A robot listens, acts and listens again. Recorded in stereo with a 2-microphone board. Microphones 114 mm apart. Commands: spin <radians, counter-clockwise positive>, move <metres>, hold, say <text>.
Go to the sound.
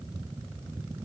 hold
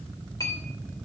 spin 0.52
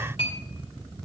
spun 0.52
spin 2.09
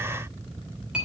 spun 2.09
spin -0.17
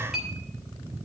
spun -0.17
move 1.0
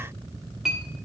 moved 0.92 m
move 1.0
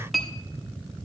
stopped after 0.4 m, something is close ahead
say I am next to the clink.